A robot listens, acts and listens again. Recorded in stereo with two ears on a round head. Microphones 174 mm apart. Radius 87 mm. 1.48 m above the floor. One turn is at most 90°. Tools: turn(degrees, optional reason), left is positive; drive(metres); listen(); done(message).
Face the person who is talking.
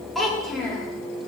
turn(degrees=30)
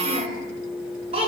turn(degrees=-30, reason="So it is at 30° right.")
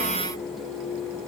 listen()
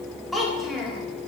done("Facing the child speaking, 1 to 2 m away.")